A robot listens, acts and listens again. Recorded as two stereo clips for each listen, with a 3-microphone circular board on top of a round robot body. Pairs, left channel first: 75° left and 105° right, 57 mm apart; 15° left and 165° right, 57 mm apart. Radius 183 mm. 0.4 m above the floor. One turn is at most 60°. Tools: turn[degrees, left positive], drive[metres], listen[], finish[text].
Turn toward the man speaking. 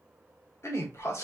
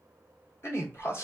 Thought: The man speaking: 55° left.
Action: turn[55]
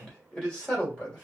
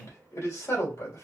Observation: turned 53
Action: finish[Facing the man speaking.]